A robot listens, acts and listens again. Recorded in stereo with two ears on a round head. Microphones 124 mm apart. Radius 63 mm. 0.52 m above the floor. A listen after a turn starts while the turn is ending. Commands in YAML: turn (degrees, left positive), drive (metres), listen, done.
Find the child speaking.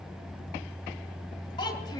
turn: 30
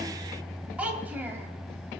turn: -15
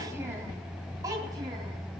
turn: -25
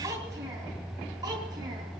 turn: -25
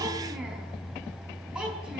done: "Facing the child speaking."